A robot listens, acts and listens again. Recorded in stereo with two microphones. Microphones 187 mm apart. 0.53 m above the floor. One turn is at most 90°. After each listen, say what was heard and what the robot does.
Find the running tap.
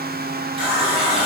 The running tap: about 30° right or 150° right. Turn 30° right.
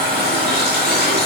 So it is at 120° right. Turn 90° right.
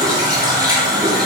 The running tap is now 20° right. Turn 20° right.
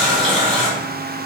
Facing the running tap.